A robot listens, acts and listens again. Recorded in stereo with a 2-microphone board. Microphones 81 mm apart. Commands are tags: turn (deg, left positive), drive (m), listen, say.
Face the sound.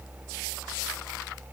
<listen/>
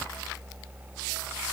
<listen/>
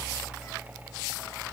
<say>I can't make out anything.</say>